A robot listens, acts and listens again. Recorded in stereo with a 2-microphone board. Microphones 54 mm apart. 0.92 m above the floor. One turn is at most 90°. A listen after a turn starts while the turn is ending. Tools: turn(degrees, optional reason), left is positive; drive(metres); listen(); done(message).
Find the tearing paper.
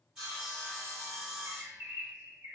listen()
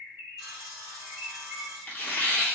turn(degrees=30, reason="The tearing paper: about 30° left or 150° left.")
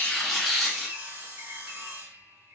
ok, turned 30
done("Found it: tearing paper, straight ahead.")